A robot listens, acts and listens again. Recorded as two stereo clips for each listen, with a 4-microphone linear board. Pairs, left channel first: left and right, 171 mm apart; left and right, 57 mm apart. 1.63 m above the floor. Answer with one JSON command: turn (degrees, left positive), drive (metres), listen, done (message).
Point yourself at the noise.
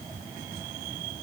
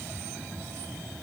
{"listen": true}
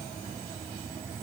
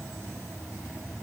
{"listen": true}
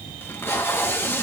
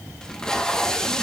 {"turn": 30}
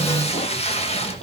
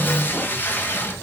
{"turn": 135}
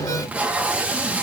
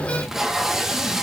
{"turn": -10}
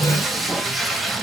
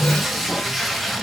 {"done": "Found it: tape being pulled, straight ahead, 1 to 2 m away."}